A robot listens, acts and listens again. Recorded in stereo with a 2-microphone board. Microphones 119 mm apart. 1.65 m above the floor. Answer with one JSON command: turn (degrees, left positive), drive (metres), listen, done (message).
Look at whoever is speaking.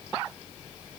{"listen": true}
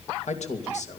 {"turn": 90}
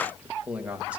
{"turn": -10}
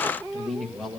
{"done": "Facing the man speaking."}